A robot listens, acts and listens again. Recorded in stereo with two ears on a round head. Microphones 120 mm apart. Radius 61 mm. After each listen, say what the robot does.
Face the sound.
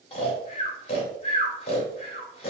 Turn 45° left.
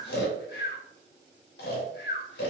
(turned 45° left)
Turn 90° left.
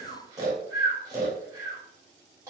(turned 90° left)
Turn 25° right.
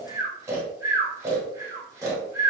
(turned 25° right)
Turn 20° right.
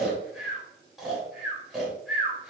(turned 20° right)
Facing the snoring, 1 to 2 m away.